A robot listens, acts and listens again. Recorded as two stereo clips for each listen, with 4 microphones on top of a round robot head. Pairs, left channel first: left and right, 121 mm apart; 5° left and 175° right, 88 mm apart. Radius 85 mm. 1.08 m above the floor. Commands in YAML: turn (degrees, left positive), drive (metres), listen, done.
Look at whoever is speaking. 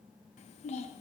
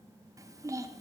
turn: 130
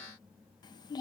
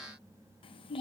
turn: 30
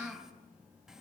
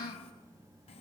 done: "Found it: a child speaking, straight ahead."